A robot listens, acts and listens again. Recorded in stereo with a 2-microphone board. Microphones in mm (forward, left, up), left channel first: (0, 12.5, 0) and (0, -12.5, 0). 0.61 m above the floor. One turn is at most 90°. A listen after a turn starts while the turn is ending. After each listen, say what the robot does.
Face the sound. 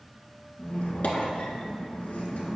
Turn 70° left.
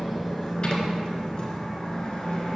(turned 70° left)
Turn 35° left.
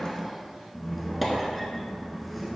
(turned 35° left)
Found it: a squeak, straight ahead.